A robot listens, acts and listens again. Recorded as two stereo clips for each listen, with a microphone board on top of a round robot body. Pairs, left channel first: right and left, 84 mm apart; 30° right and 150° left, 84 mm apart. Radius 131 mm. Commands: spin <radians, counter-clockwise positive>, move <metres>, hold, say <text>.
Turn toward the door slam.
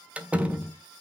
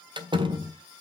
spin 2.88
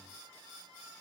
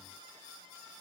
say Facing where the door slam came from. I can't hear it now.